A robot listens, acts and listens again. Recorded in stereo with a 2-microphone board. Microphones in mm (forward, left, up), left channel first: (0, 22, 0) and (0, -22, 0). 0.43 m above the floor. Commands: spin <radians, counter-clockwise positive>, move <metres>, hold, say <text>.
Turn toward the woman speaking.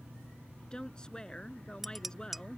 spin 0.35
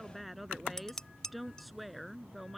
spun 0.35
say Found it: a woman speaking, straight ahead.